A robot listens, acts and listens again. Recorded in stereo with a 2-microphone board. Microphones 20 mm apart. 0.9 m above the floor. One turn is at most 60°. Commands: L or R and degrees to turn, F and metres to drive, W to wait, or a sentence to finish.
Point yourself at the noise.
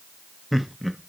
L30
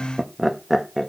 L30
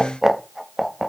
L30
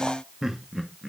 R15
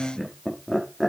Found it: laughter, straight ahead.